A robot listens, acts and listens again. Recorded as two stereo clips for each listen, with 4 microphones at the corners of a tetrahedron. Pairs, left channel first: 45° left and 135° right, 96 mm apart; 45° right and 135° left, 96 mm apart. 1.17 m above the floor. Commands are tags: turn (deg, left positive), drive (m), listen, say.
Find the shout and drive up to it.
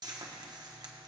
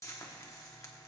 <listen/>
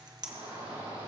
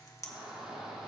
<turn deg="-140"/>
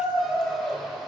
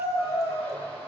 <turn deg="-40"/>
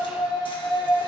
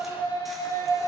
<drive m="1.0"/>
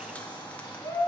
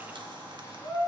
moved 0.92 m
<turn deg="10"/>
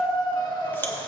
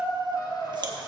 <drive m="1.0"/>
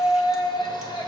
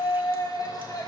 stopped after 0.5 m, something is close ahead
<say>I am next to the shout.</say>